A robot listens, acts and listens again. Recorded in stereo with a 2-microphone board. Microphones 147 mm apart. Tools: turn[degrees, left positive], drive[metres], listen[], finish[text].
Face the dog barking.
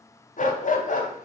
Thought: The dog barking: about 60° left or 120° left.
Action: turn[60]
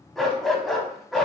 Action: finish[Facing the dog barking, under 1 m away.]